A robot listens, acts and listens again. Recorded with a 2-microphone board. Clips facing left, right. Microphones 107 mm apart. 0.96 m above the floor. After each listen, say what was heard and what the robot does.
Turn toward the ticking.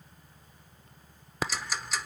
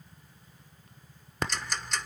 Turn 30° left.
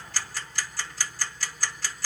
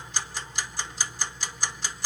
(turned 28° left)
So it is at 25° right. Turn 25° right.
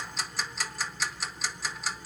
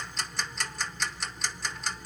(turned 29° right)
Found it: ticking, straight ahead, under 1 m away.